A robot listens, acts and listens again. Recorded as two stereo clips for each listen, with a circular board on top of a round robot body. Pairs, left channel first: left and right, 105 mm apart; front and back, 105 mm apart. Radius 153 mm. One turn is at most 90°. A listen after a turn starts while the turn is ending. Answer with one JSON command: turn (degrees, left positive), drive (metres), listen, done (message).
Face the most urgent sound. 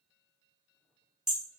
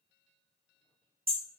{"listen": true}
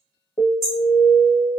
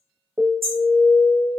{"turn": 90}
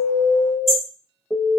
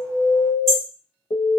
{"turn": 25}
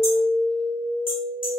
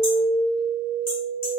{"done": "Found it: an alarm, straight ahead, 1 to 2 m away."}